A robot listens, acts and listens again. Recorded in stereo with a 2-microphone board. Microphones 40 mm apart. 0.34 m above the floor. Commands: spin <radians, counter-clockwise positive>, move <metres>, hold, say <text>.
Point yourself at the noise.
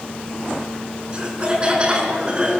spin -0.44
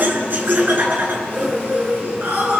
spin -2.27
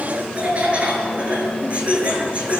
spin -0.61
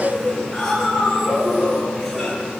spin 0.17
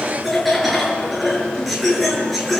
say Facing the laughter.